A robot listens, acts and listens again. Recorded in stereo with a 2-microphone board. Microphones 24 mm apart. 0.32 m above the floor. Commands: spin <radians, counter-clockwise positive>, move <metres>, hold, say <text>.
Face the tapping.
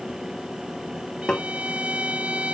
spin 0.70
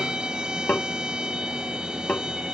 spin 1.75
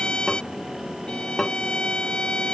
spin 0.17
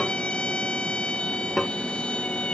say Found it: tapping, straight ahead.